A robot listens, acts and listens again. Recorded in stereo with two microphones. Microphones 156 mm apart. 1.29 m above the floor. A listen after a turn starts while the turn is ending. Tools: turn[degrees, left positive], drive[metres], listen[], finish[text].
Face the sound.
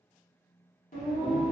Thought: The singing: about 55° left or 125° left.
Action: turn[55]
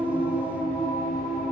Thought: So it is at 70° left.
Action: turn[70]
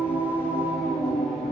Action: finish[Facing the singing, 1 to 2 m away.]